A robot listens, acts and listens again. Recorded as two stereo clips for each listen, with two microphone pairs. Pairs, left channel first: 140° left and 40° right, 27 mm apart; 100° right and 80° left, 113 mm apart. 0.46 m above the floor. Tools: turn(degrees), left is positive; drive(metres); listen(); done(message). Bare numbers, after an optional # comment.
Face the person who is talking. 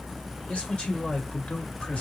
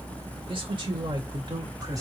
# The man speaking: 130° left.
turn(130)
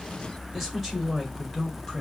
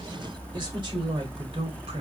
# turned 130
# The man speaking is now 45° left.
turn(45)
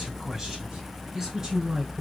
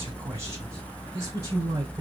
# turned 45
# The man speaking is now 20° left.
turn(20)
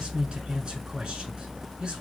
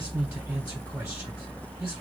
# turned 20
done("Facing the man speaking.")